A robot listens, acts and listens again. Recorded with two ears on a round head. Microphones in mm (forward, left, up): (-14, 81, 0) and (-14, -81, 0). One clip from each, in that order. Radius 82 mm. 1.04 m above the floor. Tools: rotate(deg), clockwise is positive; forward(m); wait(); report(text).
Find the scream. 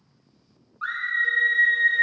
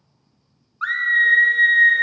rotate(55)
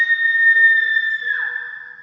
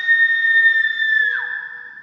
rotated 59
rotate(45)
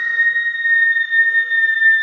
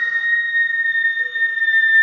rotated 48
report("Facing the scream, under 1 m away.")